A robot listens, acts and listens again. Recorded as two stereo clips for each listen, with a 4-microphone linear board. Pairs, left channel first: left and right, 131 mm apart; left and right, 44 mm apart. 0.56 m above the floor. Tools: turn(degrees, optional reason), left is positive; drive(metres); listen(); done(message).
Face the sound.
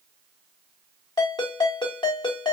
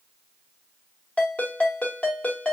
turn(degrees=35, reason="The ringtone: about 35° left or 145° left.")
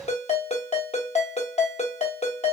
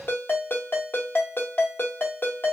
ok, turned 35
turn(degrees=105, reason="So it is at 105° left.")
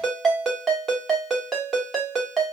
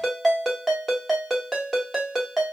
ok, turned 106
done("Found it: a ringtone, straight ahead.")